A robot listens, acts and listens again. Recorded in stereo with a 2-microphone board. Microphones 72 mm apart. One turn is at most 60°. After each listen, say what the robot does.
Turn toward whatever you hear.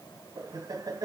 Turn 60° right.
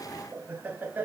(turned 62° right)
Turn 25° right.
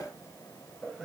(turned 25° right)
Found it: laughter, straight ahead.